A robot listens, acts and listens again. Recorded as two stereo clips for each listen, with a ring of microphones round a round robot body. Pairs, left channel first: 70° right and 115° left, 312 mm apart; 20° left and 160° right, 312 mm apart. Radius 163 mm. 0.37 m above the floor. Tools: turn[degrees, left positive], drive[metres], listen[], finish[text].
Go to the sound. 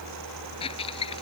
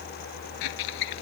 Action: drive[1.0]
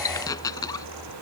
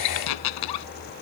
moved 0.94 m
Thought: The squeak is now 10° left.
Action: turn[10]
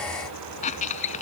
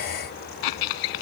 Action: drive[1.0]
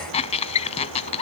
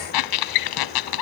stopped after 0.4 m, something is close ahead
Action: finish[I am next to the squeak.]